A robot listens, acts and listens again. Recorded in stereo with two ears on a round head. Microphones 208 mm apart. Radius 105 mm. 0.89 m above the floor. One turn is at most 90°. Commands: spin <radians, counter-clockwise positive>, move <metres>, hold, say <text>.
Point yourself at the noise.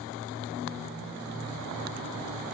hold
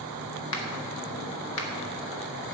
spin 1.05
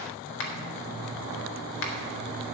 spin 0.96
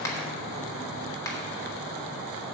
spin 0.26
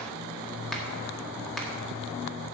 say Facing the finger snap.